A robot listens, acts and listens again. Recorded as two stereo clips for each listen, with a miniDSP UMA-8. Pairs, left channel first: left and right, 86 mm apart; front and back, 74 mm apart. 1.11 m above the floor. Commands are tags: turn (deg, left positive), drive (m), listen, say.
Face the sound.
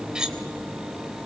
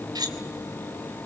<turn deg="-170"/>
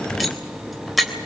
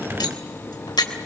<say>Facing the cutlery clinking.</say>